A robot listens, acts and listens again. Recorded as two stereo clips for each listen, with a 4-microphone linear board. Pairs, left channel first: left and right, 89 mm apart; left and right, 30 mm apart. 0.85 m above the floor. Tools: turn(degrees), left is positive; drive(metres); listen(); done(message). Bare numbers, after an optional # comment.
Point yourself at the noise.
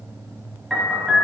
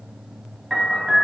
turn(30)
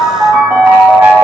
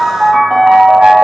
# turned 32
# So it is at 30° right.
turn(-30)
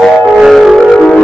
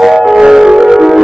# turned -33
done("Facing the piano, 1 to 2 m away.")